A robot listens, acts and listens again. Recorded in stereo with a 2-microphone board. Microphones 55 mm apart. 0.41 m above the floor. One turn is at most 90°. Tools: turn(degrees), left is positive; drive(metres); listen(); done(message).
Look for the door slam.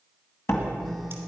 turn(degrees=50)
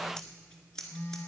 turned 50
listen()
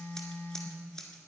done("I heard a door slam, but can't make it out now. It was about straight ahead or 80° left.")